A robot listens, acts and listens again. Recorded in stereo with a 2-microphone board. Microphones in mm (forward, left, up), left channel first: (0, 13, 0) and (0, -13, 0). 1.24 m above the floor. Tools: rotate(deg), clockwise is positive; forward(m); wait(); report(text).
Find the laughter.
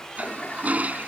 wait()
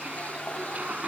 wait()
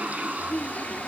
rotate(-55)
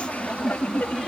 rotate(-75)
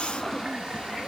report("Found it: laughter, straight ahead.")